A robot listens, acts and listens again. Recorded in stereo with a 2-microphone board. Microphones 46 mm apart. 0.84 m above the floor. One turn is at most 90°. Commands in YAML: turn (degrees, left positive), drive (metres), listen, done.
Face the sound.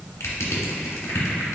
turn: 90
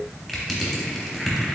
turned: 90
done: "Facing the crushing, under 1 m away."